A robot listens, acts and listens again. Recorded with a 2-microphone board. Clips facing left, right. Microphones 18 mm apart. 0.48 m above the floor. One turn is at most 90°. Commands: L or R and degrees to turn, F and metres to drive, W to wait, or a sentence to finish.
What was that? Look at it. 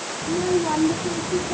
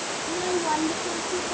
R30
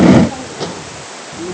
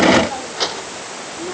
R90
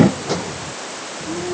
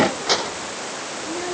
R40
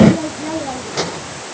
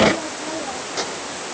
L15
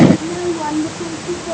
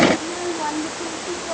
Facing the child speaking.